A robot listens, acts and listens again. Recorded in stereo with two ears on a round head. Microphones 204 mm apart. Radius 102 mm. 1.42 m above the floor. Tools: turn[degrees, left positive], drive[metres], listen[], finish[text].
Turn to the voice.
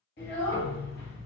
Thought: The child speaking: about 40° left or 140° left.
Action: turn[40]
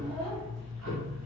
Thought: So it is at 10° left.
Action: turn[10]
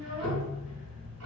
Action: listen[]
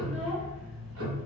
Action: finish[Facing the child speaking.]